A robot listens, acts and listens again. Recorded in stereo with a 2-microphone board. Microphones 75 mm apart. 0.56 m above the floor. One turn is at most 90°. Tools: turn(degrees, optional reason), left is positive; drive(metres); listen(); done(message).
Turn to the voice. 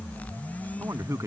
turn(degrees=-45, reason="The man speaking: about 45° right or 135° right.")
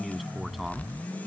listen()
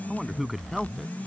done("Facing the man speaking.")